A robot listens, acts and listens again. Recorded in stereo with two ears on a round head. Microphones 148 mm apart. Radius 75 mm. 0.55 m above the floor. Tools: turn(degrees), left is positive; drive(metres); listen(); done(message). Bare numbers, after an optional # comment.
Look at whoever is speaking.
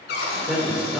turn(-30)
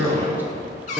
turn(30)
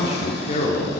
# So it is at 130° left.
turn(130)
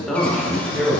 done("Found it: a man speaking, straight ahead.")